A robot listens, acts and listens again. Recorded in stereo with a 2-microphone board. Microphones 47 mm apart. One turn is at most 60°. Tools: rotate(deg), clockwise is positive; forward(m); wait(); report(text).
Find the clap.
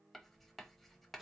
wait()
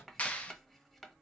rotate(-35)
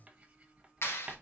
rotate(-60)
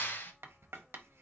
rotate(-50)
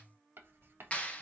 rotate(-30)
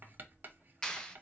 rotate(-15)
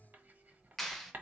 report("Found it: a clap, straight ahead.")